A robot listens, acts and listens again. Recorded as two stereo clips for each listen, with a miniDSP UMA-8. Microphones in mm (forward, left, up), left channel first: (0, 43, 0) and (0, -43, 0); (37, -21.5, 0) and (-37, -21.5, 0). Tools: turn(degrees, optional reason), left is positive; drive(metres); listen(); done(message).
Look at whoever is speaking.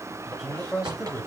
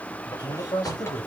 done("Found it: a man speaking, straight ahead, 2 to 4 m away.")